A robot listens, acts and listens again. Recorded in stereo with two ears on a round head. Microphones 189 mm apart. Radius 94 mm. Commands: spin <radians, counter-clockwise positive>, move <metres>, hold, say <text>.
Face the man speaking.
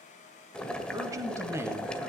spin -0.52
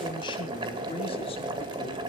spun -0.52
spin 0.44
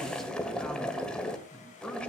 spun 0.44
say Facing the man speaking.